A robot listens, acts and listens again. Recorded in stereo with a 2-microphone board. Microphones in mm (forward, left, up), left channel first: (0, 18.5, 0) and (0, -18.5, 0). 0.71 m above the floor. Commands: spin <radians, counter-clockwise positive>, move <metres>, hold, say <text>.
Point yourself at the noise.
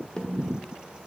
spin 0.52
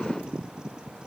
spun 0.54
hold
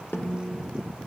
spin 2.09
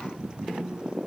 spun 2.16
say Facing the snare drum.